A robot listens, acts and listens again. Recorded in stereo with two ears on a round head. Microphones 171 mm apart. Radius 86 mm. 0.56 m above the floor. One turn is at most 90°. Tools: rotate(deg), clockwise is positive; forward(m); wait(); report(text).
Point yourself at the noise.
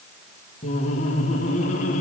rotate(-40)
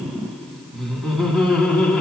report("Found it: laughter, straight ahead.")